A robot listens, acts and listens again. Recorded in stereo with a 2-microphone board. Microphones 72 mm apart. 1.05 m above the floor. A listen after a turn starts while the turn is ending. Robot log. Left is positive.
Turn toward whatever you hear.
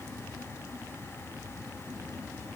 cmd idle
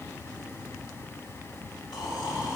cmd yaw +90
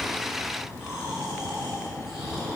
end: Facing the snoring.